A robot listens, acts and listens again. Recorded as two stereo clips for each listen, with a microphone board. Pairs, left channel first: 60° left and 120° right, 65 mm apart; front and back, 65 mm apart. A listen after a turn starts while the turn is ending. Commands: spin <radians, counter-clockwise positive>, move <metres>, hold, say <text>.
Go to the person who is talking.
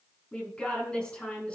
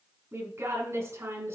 spin 2.36
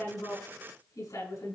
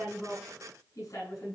spin 0.52
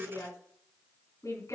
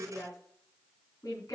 spin 0.35
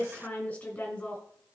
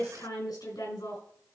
move 1.0
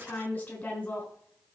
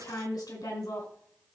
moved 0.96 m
move 1.0
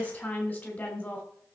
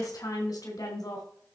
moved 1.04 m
move 1.0
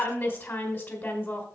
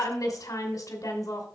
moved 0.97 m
move 1.0
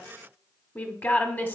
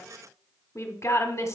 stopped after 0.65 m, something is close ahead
spin 0.17
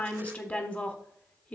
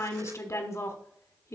say I am next to the woman speaking.